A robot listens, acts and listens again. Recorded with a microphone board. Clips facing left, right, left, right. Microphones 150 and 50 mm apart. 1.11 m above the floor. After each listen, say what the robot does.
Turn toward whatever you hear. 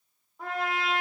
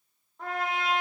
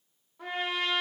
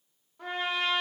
Turn 30° left.
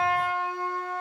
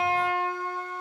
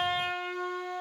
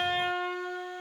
Turn 25° right.
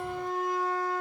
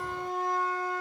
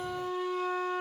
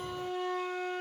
Facing the trumpet.